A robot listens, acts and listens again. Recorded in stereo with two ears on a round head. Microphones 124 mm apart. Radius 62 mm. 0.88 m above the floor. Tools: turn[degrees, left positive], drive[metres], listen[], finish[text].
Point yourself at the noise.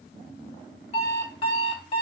Thought: The alarm clock: about 40° left or 140° left.
Action: turn[40]
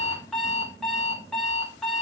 Action: finish[Facing the alarm clock.]